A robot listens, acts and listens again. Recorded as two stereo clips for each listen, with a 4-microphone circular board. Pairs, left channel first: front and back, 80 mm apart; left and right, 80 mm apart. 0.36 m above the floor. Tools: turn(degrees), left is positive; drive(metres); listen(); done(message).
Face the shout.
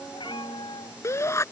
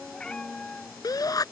turn(degrees=50)
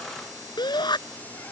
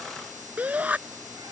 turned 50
turn(degrees=-20)
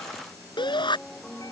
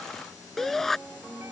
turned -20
done("Facing the shout.")